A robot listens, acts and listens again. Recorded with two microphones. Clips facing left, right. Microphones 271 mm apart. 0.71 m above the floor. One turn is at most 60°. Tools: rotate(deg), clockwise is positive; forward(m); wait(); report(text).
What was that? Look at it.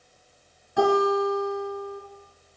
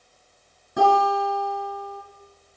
rotate(50)
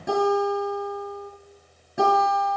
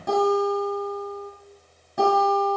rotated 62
rotate(-10)
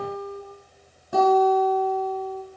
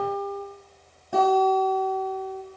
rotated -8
report("Found it: a guitar, straight ahead, over 4 m away.")